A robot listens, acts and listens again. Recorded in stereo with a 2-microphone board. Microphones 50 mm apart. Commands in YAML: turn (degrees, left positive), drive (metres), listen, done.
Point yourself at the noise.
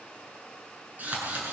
turn: -35
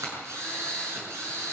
turn: -105
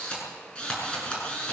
turn: 25
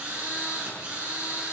turn: -20
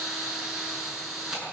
done: "Facing the drill."